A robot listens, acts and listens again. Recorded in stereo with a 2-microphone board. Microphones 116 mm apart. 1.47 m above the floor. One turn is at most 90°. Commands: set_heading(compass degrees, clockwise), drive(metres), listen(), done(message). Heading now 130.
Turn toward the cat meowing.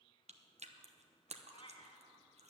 set_heading(80)
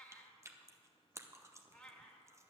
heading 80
set_heading(70)
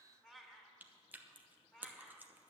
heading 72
done("Found it: a cat meowing, straight ahead, 1 to 2 m away.")